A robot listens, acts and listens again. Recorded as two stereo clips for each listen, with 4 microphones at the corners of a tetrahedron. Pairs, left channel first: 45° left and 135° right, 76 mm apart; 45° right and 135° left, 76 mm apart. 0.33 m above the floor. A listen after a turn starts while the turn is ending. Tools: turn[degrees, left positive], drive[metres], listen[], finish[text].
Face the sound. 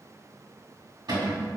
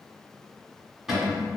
Thought: The cupboard door: 140° right.
Action: turn[-140]
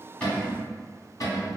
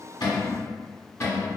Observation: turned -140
Action: finish[Facing the cupboard door.]